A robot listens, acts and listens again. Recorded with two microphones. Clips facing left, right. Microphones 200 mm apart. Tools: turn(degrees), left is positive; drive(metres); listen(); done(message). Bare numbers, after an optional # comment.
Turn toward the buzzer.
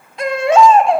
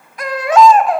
listen()
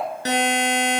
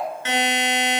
# The buzzer: about 40° left or 140° left.
turn(40)
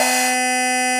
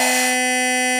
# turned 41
done("Facing the buzzer.")